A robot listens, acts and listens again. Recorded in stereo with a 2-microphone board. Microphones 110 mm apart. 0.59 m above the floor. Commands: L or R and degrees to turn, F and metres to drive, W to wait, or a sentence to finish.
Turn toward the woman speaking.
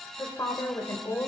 L25
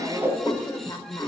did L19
L35
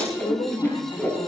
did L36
L125
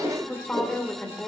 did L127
L15
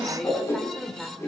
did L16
Facing the woman speaking, 2 to 4 m away.